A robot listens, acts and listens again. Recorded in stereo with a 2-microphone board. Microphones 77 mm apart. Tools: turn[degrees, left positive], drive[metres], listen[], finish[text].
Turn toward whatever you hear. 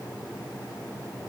Action: listen[]
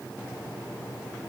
Action: listen[]
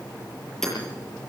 Action: turn[30]
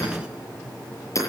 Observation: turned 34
Thought: So it is at 140° left.
Action: turn[140]
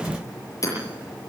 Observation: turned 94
Thought: The hammering is now 45° left.
Action: turn[45]
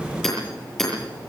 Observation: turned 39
Action: finish[Found it: hammering, straight ahead.]